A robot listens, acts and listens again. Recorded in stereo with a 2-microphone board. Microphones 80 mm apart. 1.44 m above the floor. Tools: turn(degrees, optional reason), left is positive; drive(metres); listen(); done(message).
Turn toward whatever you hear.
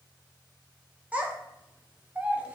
turn(degrees=-15, reason="The child speaking: about 15° right or 165° right.")
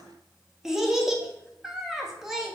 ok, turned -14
done("Facing the child speaking.")